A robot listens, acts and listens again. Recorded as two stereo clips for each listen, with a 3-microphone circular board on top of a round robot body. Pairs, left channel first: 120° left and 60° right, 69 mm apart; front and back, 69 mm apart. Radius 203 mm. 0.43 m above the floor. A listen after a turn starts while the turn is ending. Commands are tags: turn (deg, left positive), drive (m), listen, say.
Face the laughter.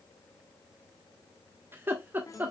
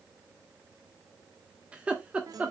<turn deg="-115"/>
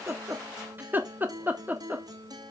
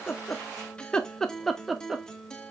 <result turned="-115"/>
<turn deg="-100"/>
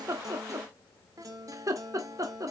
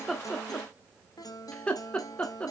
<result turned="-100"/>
<turn deg="-70"/>
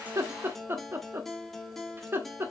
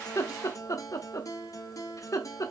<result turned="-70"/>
<turn deg="-15"/>
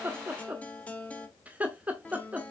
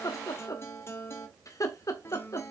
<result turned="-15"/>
<say>Found it: laughter, straight ahead.</say>